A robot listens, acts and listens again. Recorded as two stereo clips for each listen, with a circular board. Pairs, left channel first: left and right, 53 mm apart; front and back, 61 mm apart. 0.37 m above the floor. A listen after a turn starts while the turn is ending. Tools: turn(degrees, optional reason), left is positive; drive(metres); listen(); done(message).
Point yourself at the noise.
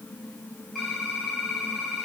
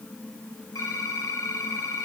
done("Facing the typing on a keyboard, over 4 m away.")